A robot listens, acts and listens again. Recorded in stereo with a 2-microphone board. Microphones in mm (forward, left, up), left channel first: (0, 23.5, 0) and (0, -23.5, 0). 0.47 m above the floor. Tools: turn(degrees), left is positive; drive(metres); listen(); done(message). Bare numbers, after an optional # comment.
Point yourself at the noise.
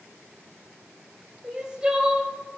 # The crying: about 15° right or 165° right.
turn(-15)
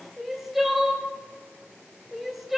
done("Facing the crying.")